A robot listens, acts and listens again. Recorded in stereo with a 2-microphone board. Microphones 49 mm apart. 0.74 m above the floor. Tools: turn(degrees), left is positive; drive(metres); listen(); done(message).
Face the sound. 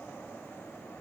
listen()
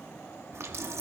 turn(degrees=-65)
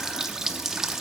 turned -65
turn(degrees=-10)
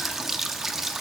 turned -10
turn(degrees=-10)
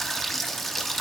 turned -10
done("Facing the running tap.")